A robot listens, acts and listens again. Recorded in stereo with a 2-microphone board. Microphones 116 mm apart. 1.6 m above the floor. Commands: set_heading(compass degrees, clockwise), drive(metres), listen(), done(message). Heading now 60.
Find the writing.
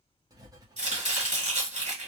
set_heading(90)
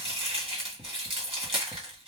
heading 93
done("Found it: writing, straight ahead, under 1 m away.")